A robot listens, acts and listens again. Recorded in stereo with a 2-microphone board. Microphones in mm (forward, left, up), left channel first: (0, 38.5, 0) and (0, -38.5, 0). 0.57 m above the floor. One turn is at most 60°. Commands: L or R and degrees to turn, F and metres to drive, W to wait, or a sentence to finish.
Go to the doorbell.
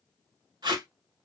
W
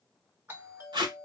R25
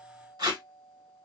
R60
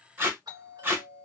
R60
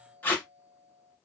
R25
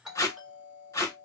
R10
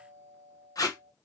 F1.0
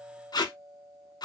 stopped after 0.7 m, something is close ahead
Arrived at the doorbell, straight ahead.